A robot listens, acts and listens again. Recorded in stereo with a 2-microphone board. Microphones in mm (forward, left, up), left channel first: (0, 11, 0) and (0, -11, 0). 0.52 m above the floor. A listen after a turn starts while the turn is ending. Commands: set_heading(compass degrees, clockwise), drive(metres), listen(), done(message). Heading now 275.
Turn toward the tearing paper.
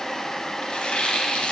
set_heading(205)
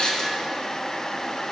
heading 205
listen()
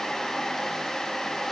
listen()
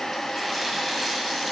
done("I heard tearing paper, but can't make it out now. It was about straight ahead or 40° left.")